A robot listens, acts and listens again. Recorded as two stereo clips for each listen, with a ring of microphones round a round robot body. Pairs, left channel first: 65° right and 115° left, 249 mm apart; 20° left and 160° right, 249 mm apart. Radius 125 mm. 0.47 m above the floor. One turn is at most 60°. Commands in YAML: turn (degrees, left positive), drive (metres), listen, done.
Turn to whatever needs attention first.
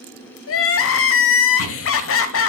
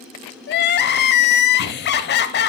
turn: -30
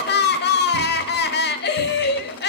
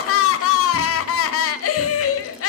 turn: -15
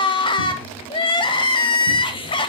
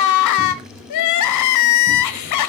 done: "Facing the crying, under 1 m away."